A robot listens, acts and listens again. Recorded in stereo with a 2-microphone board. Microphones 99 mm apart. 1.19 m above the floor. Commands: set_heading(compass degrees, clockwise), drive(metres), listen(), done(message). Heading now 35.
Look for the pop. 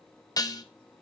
listen()
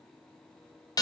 listen()
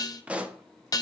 set_heading(65)
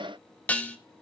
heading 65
listen()
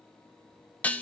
done("I heard a pop, but can't make it out now. It was about 15° left or 135° right.")